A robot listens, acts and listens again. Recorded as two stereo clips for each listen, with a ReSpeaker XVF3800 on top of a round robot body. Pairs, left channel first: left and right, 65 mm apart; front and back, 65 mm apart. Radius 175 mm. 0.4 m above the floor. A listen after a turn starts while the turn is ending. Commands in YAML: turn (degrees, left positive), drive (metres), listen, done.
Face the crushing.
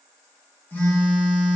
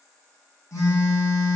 listen: true
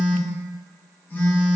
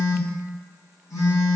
listen: true
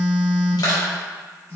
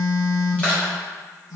turn: 70
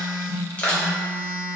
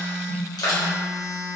turn: 20
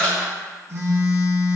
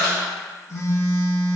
listen: true
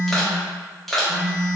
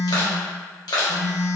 done: "Found it: crushing, straight ahead, 1 to 2 m away."